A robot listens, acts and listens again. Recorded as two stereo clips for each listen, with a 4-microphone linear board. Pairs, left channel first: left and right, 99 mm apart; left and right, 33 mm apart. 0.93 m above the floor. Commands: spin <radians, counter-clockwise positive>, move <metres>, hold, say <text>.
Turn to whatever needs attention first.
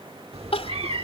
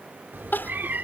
spin 1.57
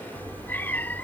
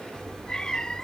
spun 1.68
hold
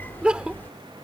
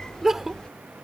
spin -0.17
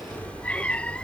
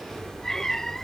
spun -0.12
hold
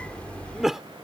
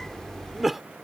say Facing the crying.